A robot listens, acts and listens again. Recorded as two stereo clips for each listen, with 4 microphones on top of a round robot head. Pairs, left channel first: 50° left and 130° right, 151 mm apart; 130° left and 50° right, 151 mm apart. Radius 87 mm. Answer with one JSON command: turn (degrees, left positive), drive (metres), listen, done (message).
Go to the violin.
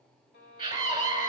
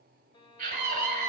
{"turn": 70}
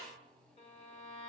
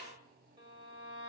{"drive": 1.0}
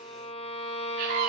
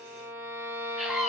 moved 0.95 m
{"turn": 20}
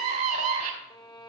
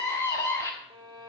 {"drive": 1.0}
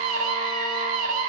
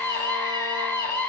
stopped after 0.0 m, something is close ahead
{"listen": true}
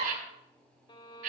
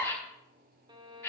{"done": "I am next to the violin."}